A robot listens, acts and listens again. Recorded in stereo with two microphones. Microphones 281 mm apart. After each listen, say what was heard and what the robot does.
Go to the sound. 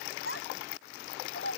The child speaking: about 45° left or 135° left. Turn 45° left.
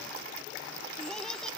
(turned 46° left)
Keep listening.
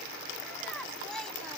Keep listening.
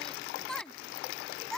Drive 1.0 m forward.
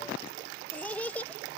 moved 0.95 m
Drive 1.0 m forward.
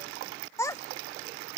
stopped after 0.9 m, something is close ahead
The child speaking is now 10° left. Turn 10° left.
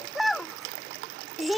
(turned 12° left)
Arrived at the child speaking, straight ahead.